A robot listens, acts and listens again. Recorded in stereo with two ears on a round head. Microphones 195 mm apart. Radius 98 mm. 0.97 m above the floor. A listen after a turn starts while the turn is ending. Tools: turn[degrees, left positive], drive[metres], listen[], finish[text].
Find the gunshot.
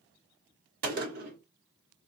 Thought: The gunshot: about 45° right or 135° right.
Action: turn[-45]
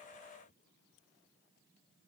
Action: listen[]
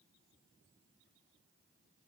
Action: finish[I heard a gunshot, but can't make it out now. It was about straight ahead or 90° right.]